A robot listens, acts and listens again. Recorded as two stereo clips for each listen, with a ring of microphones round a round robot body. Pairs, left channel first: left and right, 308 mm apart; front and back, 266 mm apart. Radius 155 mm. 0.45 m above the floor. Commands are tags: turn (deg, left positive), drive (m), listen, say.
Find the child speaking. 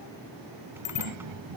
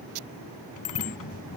<turn deg="-65"/>
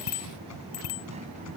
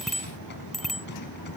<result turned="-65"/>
<listen/>
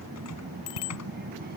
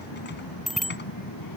<turn deg="-30"/>
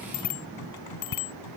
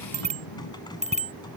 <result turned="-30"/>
<listen/>
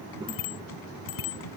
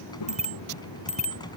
<turn deg="-15"/>
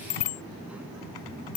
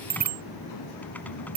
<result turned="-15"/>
<say>Found it: a child speaking, straight ahead.</say>